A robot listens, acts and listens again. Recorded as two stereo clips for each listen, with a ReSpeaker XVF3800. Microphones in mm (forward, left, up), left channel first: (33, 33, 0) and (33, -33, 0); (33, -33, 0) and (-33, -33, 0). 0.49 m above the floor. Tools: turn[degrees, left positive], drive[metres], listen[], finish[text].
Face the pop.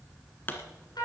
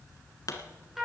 Thought: The pop: 30° left.
Action: turn[30]
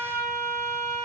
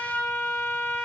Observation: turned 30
Action: finish[I heard a pop from this way, but can't make it out now.]